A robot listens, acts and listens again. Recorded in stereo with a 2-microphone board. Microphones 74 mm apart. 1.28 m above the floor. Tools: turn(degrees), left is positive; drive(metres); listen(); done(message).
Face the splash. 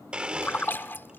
turn(degrees=30)
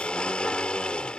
listen()
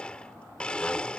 done("I heard a splash, but can't make it out now. It was about straight ahead or 120° left.")